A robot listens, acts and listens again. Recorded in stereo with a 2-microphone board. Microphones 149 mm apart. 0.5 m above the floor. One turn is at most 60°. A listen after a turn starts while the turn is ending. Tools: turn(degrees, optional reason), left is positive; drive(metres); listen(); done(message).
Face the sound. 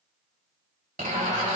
turn(degrees=-60, reason="The zipper: about 70° right or 110° right.")
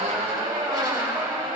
turn(degrees=-30, reason="So it is at 30° right.")
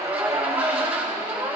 turn(degrees=-10, reason="The zipper is now 10° right.")
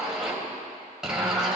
done("Facing the zipper.")